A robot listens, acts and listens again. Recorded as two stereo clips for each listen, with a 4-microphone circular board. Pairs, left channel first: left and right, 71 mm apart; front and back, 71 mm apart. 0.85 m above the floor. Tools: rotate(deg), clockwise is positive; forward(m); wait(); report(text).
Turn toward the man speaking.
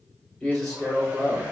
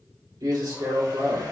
rotate(-175)
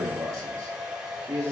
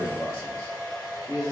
rotate(45)
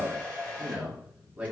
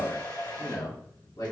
rotate(10)
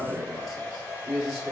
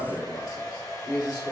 report("Facing the man speaking.")